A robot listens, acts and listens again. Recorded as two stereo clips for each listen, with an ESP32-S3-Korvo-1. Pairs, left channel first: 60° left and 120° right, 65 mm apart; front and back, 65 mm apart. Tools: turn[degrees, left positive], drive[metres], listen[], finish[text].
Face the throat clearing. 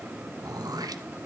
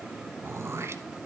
Thought: The throat clearing: 130° right.
Action: turn[-130]
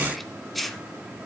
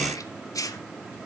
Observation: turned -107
Thought: The throat clearing is now 25° right.
Action: turn[-25]
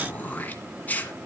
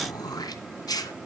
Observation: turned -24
Action: finish[Facing the throat clearing, 1 to 2 m away.]